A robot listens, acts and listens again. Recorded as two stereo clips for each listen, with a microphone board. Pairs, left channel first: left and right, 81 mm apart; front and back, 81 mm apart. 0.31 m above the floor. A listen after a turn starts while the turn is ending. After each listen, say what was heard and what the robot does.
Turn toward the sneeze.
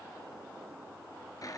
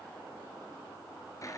Keep listening.
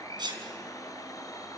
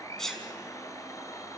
The sneeze: 85° right. Turn 85° right.
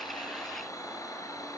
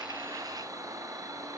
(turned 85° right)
I heard a sneeze from this way, but can't make it out now.